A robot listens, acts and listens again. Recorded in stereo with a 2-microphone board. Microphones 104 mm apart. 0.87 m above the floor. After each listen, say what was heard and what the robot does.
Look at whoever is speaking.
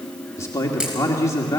The man speaking: about 30° left or 150° left. Turn 30° left.
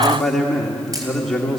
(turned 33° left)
Facing the man speaking.